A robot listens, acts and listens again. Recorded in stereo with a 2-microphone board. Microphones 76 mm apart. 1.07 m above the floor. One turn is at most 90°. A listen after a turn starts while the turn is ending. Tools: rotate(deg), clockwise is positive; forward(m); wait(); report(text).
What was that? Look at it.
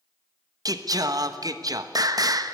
rotate(60)
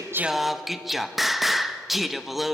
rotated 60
report("Found it: singing, straight ahead.")